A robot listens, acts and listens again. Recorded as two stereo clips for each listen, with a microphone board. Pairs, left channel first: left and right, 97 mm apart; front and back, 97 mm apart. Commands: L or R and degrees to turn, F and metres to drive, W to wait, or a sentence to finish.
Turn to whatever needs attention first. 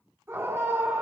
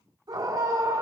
R150
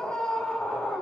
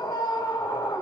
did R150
L10
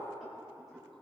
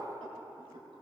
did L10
W
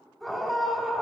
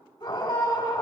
Facing the scream, 2 to 4 m away.